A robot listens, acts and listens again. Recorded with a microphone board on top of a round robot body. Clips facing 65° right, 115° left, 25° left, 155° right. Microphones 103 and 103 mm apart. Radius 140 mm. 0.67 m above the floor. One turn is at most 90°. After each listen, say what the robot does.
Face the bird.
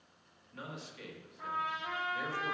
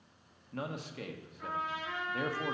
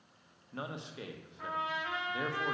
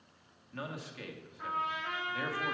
Keep listening.
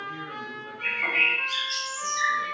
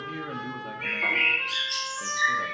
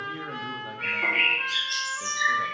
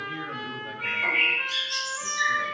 Turn 25° left.
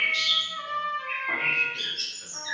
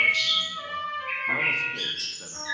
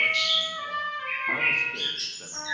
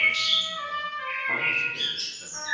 Facing the bird.